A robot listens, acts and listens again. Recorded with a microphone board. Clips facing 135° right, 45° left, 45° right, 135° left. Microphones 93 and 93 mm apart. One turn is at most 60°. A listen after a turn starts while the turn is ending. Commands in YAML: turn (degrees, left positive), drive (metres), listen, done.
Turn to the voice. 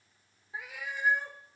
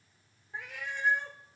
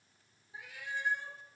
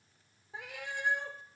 listen: true
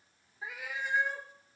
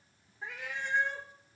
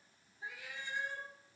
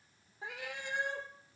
listen: true
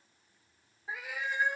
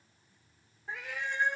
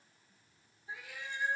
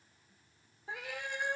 done: "I can't make out anyone speaking to turn to."